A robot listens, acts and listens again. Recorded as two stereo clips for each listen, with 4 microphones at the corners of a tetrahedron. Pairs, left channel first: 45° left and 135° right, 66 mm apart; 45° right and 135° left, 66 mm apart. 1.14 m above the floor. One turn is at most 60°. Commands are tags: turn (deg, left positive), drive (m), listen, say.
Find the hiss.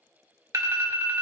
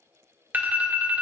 <listen/>
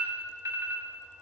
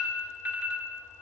<listen/>
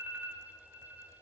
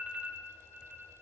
<say>I can't make out a hiss, only an alarm.</say>